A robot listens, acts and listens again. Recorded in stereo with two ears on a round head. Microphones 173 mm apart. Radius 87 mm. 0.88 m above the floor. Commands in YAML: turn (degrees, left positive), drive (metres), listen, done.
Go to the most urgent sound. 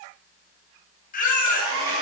turn: 45
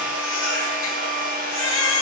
turn: 95
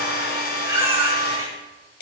turn: -10
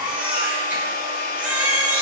drive: 1.0
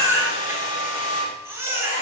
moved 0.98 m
turn: -10
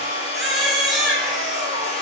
drive: 1.0
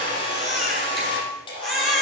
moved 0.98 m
drive: 1.0
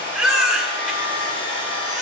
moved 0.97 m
drive: 1.0
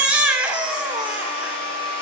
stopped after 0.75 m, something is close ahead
done: "I am next to the baby crying."